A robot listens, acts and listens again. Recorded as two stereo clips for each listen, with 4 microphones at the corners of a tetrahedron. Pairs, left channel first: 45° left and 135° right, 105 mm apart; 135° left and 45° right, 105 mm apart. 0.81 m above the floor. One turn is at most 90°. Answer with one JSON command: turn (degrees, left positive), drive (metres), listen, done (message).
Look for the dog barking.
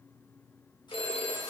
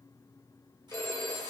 {"listen": true}
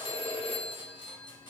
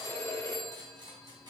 {"listen": true}
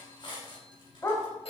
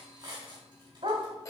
{"turn": -10}
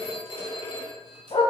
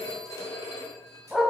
{"turn": 45}
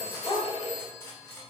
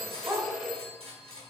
{"turn": 20}
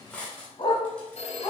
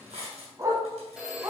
{"turn": 15}
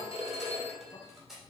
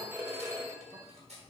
{"listen": true}
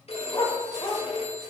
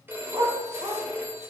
{"done": "Found it: a dog barking, straight ahead."}